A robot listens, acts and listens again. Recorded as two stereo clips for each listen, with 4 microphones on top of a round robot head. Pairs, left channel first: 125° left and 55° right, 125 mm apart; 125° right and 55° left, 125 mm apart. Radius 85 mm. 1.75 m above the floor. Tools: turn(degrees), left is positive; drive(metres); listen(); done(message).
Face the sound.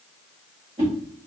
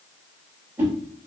turn(degrees=-15)
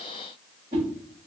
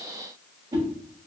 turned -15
done("Found it: a whoosh, straight ahead.")